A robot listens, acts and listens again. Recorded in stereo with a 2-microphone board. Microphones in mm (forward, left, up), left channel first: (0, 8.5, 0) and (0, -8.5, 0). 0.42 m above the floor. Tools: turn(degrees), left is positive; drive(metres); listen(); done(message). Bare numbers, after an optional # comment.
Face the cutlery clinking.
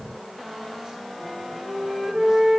listen()
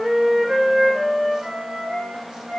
listen()
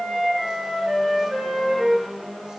done("I can't make out cutlery clinking, only a flute.")